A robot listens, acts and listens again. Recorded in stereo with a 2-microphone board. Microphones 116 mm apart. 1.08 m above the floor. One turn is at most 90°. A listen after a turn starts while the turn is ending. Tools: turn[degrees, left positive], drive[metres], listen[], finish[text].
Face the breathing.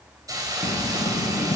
Thought: The breathing: about 70° left or 110° left.
Action: turn[70]
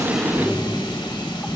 Action: finish[Found it: breathing, straight ahead.]